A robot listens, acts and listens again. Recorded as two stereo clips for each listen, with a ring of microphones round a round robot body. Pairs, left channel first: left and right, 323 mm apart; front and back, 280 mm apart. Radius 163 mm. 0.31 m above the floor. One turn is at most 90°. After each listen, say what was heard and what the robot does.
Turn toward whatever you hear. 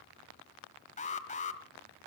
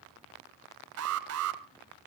The alarm: 155° left. Turn 90° left.
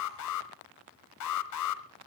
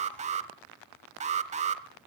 The alarm is now 115° left. Turn 90° left.
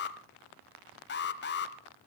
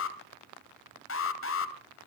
The alarm is now 35° left. Turn 35° left.
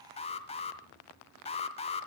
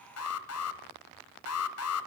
The alarm is now 20° left. Turn 20° left.
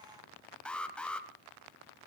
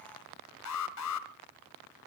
Found it: an alarm, straight ahead, 1 to 2 m away.